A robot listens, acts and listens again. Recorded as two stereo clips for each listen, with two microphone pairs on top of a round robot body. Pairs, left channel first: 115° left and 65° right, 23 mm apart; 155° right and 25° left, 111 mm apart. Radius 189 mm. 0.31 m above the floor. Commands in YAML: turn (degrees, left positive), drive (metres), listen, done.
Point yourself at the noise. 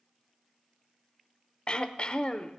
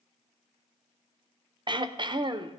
turn: 65
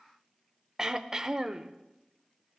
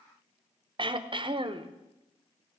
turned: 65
done: "Facing the throat clearing."